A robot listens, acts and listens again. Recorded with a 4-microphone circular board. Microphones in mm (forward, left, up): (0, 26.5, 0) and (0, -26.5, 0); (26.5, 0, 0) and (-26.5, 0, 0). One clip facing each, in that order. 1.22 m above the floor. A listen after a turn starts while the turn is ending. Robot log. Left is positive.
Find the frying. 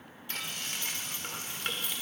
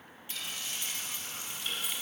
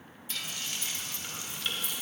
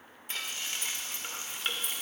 note: The frying: 120° left.
cmd yaw +120
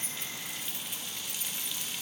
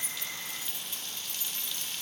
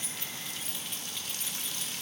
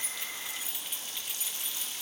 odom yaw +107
note: The frying is now 15° left.
cmd yaw +15
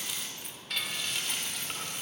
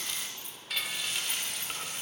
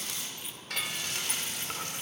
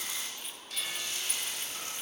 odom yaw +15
end: Found it: frying, straight ahead.